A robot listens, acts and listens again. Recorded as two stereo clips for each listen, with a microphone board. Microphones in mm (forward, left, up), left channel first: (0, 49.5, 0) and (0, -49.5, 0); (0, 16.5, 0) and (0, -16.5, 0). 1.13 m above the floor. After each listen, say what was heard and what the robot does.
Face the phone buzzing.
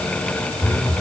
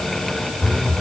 Turn 30° left.
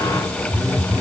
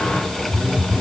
So it is at 25° right. Turn 25° right.
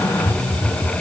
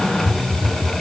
The phone buzzing is now 15° left. Turn 15° left.
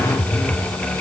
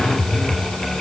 Found it: a phone buzzing, straight ahead.